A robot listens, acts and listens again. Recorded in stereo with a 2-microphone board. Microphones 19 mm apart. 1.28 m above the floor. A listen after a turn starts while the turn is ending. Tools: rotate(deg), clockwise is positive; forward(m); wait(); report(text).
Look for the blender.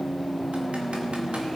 wait()
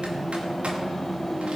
wait()
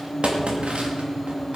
report("I can't make out a blender to turn to.")